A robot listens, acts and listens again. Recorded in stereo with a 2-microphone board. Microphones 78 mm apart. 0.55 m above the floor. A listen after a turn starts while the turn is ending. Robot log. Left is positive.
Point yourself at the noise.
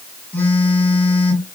note: The phone buzzing: about 25° left or 155° left.
cmd yaw +25
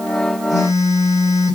note: So it is at 130° left.
cmd yaw +130
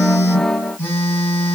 note: The phone buzzing is now 30° left.
cmd yaw +30
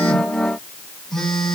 end: Facing the phone buzzing.